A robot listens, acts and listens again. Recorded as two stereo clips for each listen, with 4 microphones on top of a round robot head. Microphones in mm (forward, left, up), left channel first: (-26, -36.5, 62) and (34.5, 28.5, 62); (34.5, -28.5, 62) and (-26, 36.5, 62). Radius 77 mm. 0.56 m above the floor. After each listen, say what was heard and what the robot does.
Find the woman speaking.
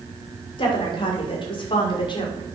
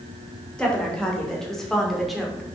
The woman speaking: 140° right. Turn 140° right.
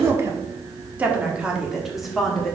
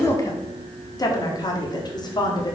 The woman speaking is now 50° right. Turn 50° right.
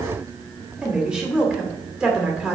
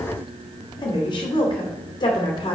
The woman speaking is now 30° right. Turn 30° right.
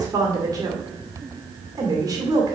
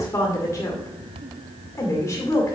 The woman speaking is now 10° left. Turn 10° left.
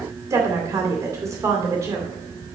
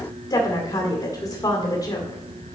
Found it: a woman speaking, straight ahead, 2 to 4 m away.